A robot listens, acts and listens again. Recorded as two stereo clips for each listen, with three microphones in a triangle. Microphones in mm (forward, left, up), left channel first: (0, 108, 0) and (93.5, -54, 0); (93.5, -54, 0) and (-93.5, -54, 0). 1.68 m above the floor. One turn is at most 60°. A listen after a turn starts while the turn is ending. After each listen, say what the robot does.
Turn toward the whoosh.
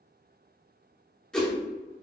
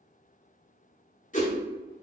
Turn 35° left.
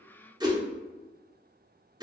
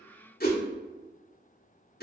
Found it: a whoosh, straight ahead.